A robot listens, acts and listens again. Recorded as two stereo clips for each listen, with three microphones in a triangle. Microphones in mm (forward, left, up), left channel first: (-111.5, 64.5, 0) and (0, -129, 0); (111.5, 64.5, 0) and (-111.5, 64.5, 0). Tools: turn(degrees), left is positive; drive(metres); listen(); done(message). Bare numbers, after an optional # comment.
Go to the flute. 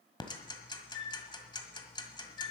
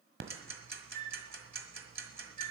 # The flute: 130° left.
turn(130)
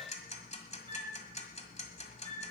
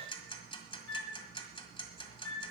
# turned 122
drive(1.0)
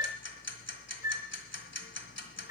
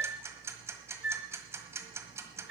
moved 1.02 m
# The flute is now 15° left.
turn(15)
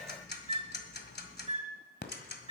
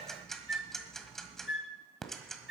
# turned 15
drive(1.0)
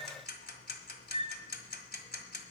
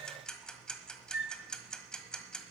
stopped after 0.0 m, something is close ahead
done("I am next to the flute.")